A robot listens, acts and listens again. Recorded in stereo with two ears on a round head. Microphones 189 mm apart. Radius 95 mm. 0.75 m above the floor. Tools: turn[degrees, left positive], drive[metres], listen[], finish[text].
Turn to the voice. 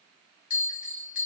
Action: listen[]
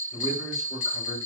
Thought: The man speaking: about 50° left or 130° left.
Action: turn[50]
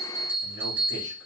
Action: listen[]
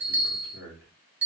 Thought: So it is at 70° left.
Action: turn[70]
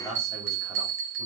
Action: finish[Found it: a man speaking, straight ahead, 2 to 4 m away.]